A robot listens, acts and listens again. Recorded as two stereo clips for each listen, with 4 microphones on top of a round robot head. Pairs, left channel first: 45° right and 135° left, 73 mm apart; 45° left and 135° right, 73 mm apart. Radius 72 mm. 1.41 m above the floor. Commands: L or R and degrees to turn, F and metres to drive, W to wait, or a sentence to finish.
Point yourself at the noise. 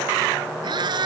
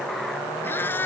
L110
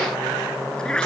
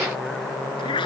L35
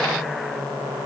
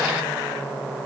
W
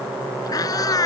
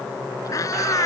Facing the cat meowing.